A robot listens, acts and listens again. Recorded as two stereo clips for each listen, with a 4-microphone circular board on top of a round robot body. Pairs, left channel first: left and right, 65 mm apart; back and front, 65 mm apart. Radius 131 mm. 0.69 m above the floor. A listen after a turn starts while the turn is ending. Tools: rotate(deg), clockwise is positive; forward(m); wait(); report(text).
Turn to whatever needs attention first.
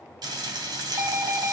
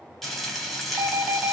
rotate(50)
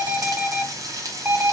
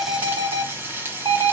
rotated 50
rotate(15)
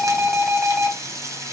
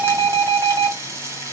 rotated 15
report("Facing the alarm.")